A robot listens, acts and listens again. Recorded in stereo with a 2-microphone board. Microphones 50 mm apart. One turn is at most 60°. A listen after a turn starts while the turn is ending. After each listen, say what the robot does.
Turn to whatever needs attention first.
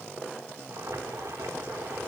Keep listening.
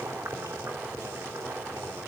Keep listening.
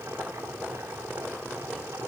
I can't make out anything urgent, only boiling.